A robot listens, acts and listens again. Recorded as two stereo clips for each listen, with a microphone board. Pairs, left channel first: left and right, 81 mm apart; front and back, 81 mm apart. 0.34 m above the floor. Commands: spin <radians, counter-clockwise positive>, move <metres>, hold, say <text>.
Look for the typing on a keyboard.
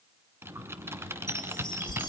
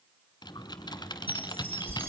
spin -0.52
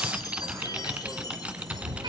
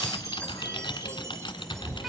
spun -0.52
spin -0.26
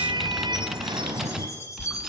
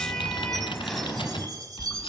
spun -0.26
hold
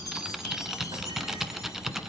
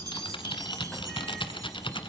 say Facing the typing on a keyboard.